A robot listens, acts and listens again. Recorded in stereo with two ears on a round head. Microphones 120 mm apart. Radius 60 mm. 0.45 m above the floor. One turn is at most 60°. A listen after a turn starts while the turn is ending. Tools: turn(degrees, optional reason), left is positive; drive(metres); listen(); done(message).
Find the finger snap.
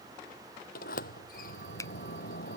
turn(degrees=25, reason="The finger snap: about 25° left or 155° left.")
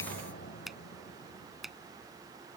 done("Facing the finger snap.")